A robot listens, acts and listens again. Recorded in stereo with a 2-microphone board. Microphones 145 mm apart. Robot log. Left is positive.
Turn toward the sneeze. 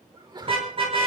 note: The sneeze: about 30° right or 150° right.
cmd yaw -30
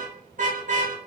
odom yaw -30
cmd idle
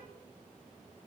end: I heard a sneeze, but can't make it out now. It was about straight ahead or 120° right.